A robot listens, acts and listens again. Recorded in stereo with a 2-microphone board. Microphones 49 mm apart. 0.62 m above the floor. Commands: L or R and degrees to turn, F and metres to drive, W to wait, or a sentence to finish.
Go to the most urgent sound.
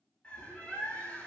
W
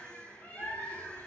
W
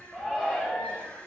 L15
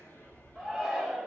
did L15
F1.0
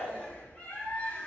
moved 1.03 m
F1.0
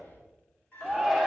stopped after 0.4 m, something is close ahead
Arrived at the shout, straight ahead.